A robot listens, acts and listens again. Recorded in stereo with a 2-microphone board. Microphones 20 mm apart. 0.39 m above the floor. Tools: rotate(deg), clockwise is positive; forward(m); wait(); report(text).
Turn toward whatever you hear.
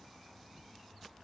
wait()
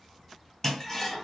rotate(-20)
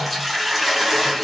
report("Facing the toilet flushing, 2 to 4 m away.")